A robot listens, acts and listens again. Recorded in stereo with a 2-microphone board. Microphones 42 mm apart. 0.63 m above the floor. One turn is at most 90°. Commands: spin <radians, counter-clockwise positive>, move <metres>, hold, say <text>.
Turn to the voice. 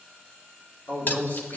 spin 1.13
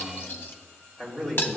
say Found it: a man speaking, straight ahead.